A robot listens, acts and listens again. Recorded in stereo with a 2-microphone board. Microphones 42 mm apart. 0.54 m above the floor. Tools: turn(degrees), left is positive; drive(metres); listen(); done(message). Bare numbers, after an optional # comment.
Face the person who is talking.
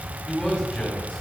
# The man speaking: about 20° left or 160° left.
turn(20)
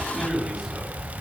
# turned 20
done("Found it: a man speaking, straight ahead.")